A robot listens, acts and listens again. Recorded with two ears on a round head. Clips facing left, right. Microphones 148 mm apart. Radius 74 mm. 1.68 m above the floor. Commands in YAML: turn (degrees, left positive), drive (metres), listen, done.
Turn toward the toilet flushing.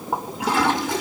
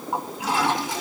turn: 50
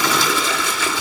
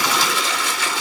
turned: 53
turn: 75
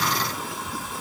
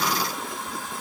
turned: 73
listen: true
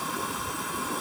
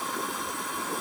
done: "Found it: a toilet flushing, straight ahead, over 4 m away."